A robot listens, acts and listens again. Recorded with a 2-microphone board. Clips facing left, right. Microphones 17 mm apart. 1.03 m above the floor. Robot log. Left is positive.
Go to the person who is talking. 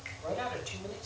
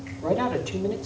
cmd yaw +30
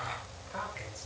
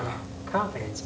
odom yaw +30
note: So it is at 30° right.
cmd yaw -30
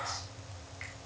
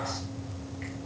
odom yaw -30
cmd idle
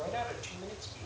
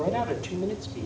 cmd fwd 1.0
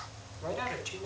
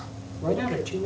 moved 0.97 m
note: The man speaking is now 20° left.
cmd yaw +20
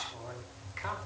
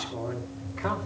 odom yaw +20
cmd fwd 1.0
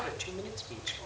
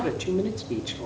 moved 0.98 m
note: The man speaking is now 10° left.
cmd yaw +10
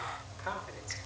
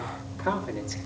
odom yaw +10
cmd fwd 1.0
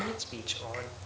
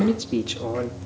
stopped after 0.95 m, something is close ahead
end: I am next to the man speaking.